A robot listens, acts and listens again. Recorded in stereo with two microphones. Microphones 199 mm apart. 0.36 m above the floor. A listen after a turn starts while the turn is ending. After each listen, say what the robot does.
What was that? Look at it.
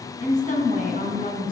Turn 45° left.
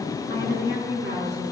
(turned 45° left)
Turn 105° left.
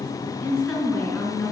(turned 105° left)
Facing the woman speaking.